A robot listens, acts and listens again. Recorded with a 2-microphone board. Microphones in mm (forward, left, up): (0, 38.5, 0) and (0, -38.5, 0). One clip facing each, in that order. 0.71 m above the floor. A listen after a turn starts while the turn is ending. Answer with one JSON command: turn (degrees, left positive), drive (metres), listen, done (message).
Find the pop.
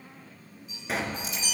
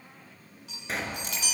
{"turn": 30}
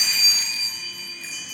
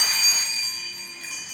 {"listen": true}
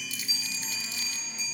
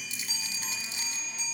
{"done": "I heard a pop, but can't make it out now. It was about 30° right or 150° left."}